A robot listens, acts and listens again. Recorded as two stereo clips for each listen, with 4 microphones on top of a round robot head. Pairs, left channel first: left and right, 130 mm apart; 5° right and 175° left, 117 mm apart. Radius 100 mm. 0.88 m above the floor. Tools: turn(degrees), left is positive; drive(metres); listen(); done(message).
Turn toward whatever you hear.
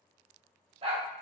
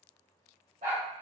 turn(degrees=-135)
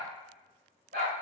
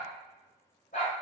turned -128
turn(degrees=-55)
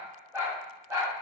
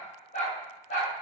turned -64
turn(degrees=-20)
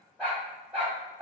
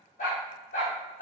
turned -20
turn(degrees=-10)
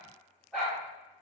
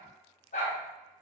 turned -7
done("Found it: a dog barking, straight ahead, 2 to 4 m away.")